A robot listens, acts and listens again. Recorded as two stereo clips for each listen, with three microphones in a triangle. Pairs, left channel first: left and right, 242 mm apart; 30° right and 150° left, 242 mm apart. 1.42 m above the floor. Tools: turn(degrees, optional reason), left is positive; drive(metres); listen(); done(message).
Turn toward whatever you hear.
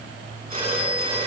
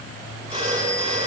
turn(degrees=-145, reason="The phone ringing: 145° right.")
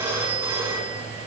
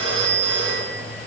turn(degrees=-10, reason="The phone ringing is now 10° right.")
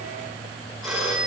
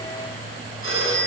done("Found it: a phone ringing, straight ahead, over 4 m away.")